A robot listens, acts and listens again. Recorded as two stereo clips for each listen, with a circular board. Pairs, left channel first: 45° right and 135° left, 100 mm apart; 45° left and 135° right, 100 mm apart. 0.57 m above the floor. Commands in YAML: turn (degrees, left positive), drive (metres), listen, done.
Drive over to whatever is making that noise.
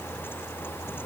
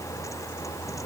listen: true
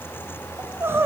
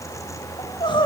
turn: 70
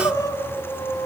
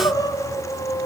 drive: 1.0
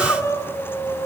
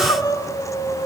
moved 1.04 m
turn: 10
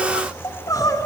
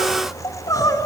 drive: 1.0
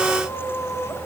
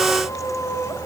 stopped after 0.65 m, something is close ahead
done: "Arrived at the crying, straight ahead."